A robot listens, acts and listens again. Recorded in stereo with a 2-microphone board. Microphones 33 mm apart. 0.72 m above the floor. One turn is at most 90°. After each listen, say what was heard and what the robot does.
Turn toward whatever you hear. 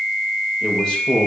The man speaking: about 20° left or 160° left. Turn 20° left.
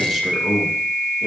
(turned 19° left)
Facing the man speaking.